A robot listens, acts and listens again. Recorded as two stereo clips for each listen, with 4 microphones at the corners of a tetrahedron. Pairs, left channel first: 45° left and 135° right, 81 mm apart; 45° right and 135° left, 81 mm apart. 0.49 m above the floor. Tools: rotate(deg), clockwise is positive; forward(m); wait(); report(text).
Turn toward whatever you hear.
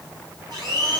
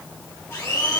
rotate(105)
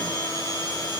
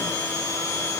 rotate(-15)
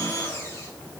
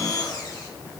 rotate(10)
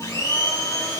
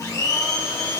report("Found it: a blender, straight ahead, 2 to 4 m away.")